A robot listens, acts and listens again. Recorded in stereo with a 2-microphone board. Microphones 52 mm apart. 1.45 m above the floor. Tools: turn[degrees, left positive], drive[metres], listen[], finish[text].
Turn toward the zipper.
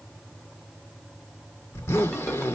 Thought: The zipper: about 70° left or 110° left.
Action: turn[70]
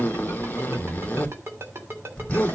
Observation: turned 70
Thought: So it is at 30° left.
Action: turn[30]
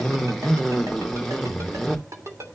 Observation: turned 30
Action: finish[Found it: a zipper, straight ahead.]